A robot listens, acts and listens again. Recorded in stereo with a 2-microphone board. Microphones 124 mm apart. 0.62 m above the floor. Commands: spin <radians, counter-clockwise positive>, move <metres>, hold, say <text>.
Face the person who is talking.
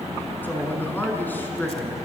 spin 0.52
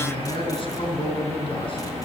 spin 2.36
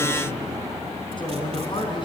spin 0.70
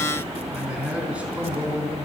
spin -0.17
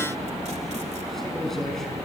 say Found it: a man speaking, straight ahead, over 4 m away.